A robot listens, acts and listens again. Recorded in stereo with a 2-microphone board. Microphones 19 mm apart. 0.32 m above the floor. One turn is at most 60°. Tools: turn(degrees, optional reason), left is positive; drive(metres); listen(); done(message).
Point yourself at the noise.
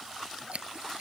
turn(degrees=-60, reason="The scissors: about 75° right or 105° right.")
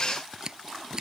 turn(degrees=-40, reason="So it is at 40° right.")
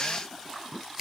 listen()
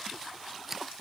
turn(degrees=-20, reason="The scissors is now 20° right.")
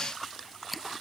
done("Found it: scissors, straight ahead.")